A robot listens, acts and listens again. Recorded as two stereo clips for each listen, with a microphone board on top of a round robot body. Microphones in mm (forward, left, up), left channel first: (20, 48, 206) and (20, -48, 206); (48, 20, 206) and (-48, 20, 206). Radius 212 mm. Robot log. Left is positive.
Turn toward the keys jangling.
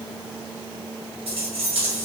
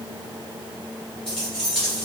note: The keys jangling: 85° right.
cmd yaw -85
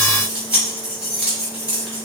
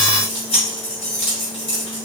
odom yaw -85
note: The keys jangling is now 15° right.
cmd yaw -15
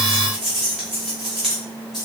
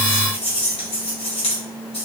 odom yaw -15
end: Found it: keys jangling, straight ahead, 1 to 2 m away.